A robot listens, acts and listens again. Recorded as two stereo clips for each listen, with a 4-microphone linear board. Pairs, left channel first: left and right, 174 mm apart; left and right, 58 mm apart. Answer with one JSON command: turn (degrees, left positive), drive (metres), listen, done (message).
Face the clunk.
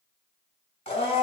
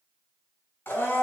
{"listen": true}
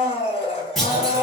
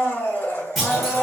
{"turn": 30}
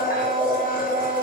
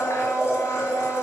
{"listen": true}
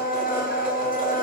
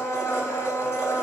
{"done": "I heard a clunk, but can't make it out now. It was about 30° right or 150° left."}